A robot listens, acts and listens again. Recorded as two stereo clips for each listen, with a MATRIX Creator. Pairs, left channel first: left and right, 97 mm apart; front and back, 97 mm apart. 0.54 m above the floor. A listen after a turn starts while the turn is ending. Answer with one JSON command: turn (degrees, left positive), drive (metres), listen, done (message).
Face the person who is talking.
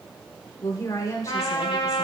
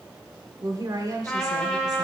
{"turn": 135}
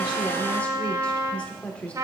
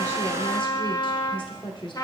{"turn": 15}
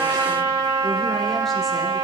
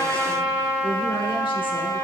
{"listen": true}
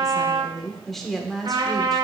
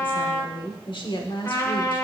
{"done": "Found it: a woman speaking, straight ahead, 1 to 2 m away."}